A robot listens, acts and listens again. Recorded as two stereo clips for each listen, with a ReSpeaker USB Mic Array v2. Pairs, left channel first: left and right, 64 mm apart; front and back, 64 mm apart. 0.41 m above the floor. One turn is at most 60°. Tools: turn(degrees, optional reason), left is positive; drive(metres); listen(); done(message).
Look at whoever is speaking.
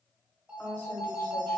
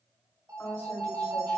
turn(degrees=50, reason="The woman speaking: 50° left.")
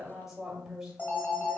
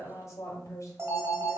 done("Facing the woman speaking, 1 to 2 m away.")